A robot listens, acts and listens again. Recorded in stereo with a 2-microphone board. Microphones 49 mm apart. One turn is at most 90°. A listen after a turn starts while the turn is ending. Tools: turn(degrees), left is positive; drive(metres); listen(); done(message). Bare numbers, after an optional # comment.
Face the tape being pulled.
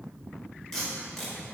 turn(30)
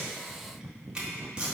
# So it is at 20° right.
turn(-20)
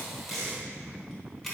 done("Found it: tape being pulled, straight ahead.")